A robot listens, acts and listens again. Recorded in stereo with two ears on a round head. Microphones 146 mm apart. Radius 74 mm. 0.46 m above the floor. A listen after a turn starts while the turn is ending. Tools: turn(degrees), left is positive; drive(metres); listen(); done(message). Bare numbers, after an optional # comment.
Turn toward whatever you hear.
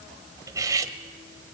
# The cutlery clinking: about 20° right or 160° right.
turn(-20)
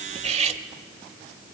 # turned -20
# So it is at 135° right.
turn(-135)
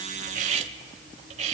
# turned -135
# The cutlery clinking is now 45° right.
turn(-45)
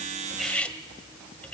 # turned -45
# The cutlery clinking is now 10° left.
turn(10)
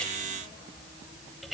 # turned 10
done("Facing the cutlery clinking, 1 to 2 m away.")